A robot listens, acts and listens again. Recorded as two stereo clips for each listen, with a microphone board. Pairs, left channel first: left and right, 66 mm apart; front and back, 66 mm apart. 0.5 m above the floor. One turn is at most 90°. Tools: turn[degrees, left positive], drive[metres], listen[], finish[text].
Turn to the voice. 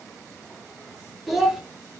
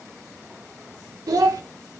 Thought: The child speaking: 175° right.
Action: turn[-90]
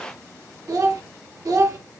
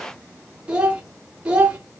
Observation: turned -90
Thought: The child speaking is now 110° right.
Action: turn[-90]
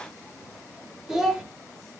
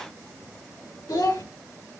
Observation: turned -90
Thought: The child speaking is now 10° right.
Action: turn[-10]
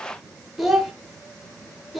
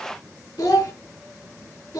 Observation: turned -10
Action: finish[Found it: a child speaking, straight ahead, under 1 m away.]